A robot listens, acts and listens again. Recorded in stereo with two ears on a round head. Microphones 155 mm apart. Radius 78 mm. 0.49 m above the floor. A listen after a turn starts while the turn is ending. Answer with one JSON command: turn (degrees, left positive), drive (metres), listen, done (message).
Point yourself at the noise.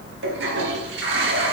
{"turn": -70}
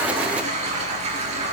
{"turn": -40}
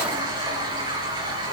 {"turn": -25}
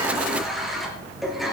{"done": "Found it: a toilet flushing, straight ahead, over 4 m away."}